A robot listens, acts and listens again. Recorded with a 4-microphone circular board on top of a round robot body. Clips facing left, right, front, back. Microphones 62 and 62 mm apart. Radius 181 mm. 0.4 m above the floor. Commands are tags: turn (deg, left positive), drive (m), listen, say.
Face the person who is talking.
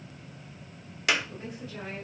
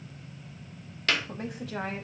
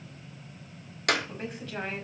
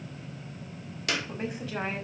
<turn deg="-95"/>
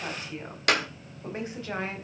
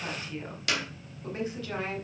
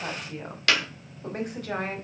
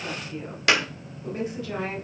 <turn deg="30"/>
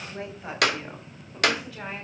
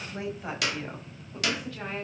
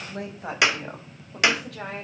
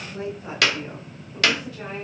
<say>Facing the woman speaking, over 4 m away.</say>